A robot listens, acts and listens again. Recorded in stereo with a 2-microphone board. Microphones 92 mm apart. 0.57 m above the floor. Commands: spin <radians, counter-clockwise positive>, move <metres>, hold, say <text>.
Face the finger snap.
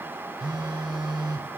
hold
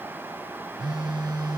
hold
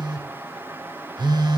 say I can't make out a finger snap to turn to.